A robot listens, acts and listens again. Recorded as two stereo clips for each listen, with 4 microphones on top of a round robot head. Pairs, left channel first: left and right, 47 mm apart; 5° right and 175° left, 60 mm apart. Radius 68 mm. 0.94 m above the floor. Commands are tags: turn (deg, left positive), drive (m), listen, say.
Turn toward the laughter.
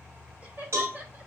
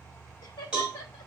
<turn deg="-30"/>
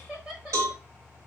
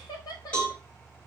<turn deg="-10"/>
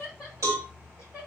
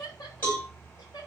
<turn deg="-15"/>
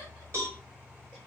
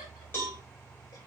<listen/>
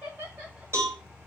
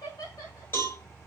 <turn deg="-20"/>
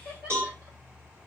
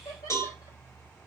<turn deg="-10"/>
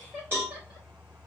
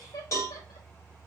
<say>Found it: laughter, straight ahead.</say>